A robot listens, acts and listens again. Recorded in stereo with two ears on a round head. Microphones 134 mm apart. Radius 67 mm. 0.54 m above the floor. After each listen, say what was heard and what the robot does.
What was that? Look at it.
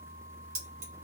The keys jangling: about 45° right or 135° right. Turn 45° right.
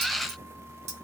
So it is at 85° right. Turn 85° right.
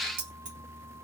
The keys jangling is now 50° right. Turn 50° right.
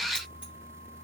Keep listening.
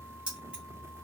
Facing the keys jangling, 1 to 2 m away.